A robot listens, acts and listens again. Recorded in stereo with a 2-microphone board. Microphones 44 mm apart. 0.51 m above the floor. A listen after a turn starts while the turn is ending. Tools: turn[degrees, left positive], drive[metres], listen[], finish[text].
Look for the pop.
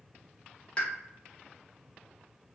Thought: The pop: about 25° left or 155° left.
Action: turn[25]
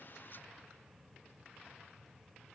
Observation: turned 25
Action: listen[]
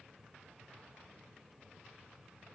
Action: finish[I heard a pop, but can't make it out now. It was about straight ahead or 130° left.]